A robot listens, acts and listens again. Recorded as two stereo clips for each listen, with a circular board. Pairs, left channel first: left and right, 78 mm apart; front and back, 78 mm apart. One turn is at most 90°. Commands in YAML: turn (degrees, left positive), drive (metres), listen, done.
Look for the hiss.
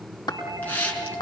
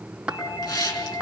turn: 20
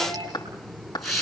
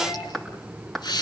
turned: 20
done: "Found it: a hiss, straight ahead, over 4 m away."